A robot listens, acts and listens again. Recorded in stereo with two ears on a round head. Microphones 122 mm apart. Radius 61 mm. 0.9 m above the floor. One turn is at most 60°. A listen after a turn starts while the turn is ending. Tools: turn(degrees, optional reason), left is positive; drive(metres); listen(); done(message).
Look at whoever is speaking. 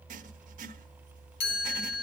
listen()
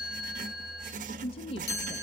turn(degrees=40, reason="The woman speaking: about 40° left or 140° left.")
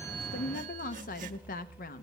turn(degrees=60, reason="So it is at 95° left.")
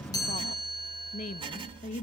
turn(degrees=60, reason="The woman speaking is now 65° left.")
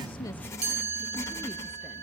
listen()
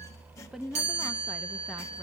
done("Facing the woman speaking.")